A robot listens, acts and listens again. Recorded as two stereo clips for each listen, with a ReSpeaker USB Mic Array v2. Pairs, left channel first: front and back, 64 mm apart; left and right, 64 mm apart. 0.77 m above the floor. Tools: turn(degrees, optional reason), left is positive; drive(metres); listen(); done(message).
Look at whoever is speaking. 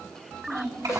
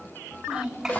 turn(degrees=-170, reason="The child speaking: 170° right.")
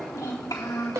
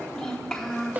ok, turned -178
turn(degrees=10, reason="The child speaking is now 10° left.")
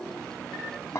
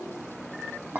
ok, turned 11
listen()
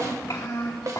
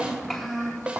done("Facing the child speaking, 2 to 4 m away.")